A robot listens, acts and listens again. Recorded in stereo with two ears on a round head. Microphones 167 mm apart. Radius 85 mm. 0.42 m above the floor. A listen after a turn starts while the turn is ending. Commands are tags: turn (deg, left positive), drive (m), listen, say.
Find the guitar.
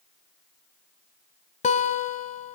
<turn deg="40"/>
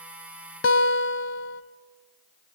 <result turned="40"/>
<turn deg="100"/>
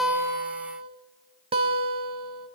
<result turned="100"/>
<turn deg="-30"/>
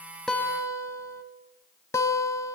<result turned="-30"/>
<turn deg="15"/>
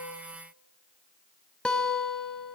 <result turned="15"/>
<say>Facing the guitar.</say>